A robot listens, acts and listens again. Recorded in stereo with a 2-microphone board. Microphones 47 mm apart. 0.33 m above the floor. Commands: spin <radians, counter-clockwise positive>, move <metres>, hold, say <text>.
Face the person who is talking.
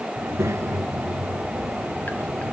spin -1.57
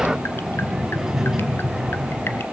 spin -0.17
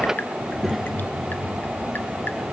say Facing the child speaking.